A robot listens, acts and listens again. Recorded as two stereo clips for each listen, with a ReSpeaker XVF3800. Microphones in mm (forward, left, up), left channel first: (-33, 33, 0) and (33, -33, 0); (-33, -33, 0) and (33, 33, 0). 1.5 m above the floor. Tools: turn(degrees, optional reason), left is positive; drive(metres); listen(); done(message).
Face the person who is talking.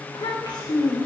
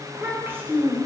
turn(degrees=105, reason="The child speaking: 105° left.")
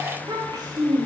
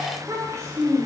turn(degrees=-10, reason="The child speaking is now 10° right.")
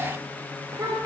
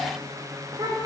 done("Facing the child speaking.")